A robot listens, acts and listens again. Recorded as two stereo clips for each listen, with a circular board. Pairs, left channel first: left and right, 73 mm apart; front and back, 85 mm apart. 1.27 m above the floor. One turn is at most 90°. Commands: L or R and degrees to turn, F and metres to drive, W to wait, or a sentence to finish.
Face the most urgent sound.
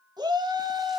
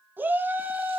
R90
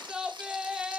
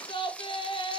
R10
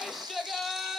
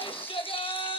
Facing the shout.